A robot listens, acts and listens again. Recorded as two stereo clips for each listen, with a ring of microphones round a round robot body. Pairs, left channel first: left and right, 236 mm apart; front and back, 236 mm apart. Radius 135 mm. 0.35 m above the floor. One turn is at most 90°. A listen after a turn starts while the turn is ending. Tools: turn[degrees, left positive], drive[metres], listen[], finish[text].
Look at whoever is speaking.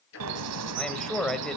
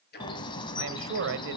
Thought: The man speaking: 175° left.
Action: turn[90]
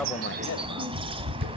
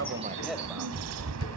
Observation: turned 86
Thought: Nothing new. It was at 90° left.
Action: turn[90]
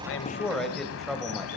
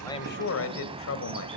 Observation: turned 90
Action: finish[Found it: a man speaking, straight ahead, 1 to 2 m away.]